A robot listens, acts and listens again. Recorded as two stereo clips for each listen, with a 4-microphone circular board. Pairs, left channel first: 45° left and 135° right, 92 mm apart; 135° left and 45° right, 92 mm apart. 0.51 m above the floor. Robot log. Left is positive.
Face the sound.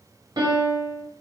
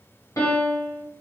note: The piano: 175° right.
cmd yaw -175
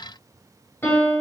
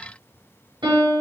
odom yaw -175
note: The piano is now 20° right.
cmd yaw -20
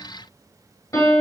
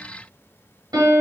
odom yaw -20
note: The piano is now 10° right.
cmd yaw -10
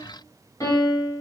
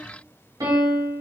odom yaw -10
end: Found it: a piano, straight ahead, 1 to 2 m away.